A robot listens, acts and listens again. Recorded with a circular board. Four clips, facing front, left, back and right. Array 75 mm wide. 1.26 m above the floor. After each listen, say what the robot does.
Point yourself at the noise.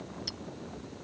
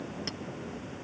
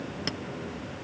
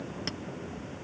Turn 165° right.
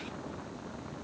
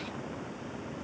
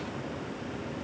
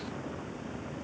Keep listening.
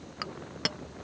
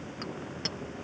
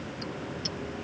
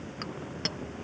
Turn 10° right.
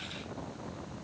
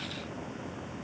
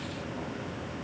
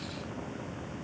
Keep listening.
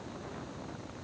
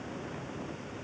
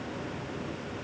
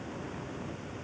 Keep listening.
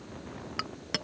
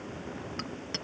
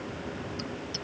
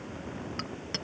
Facing the clink.